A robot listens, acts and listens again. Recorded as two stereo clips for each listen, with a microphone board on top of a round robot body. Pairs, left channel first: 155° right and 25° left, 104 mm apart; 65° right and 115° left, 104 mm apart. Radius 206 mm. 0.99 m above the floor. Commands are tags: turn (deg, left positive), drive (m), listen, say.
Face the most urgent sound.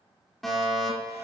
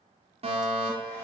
<turn deg="115"/>
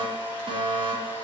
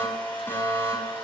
<say>Found it: a fire alarm, straight ahead, over 4 m away.</say>